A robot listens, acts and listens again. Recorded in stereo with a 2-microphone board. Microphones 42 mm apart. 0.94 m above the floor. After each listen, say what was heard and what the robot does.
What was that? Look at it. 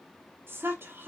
The woman speaking: about 65° right or 115° right. Turn 65° right.
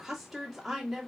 Facing the woman speaking, 1 to 2 m away.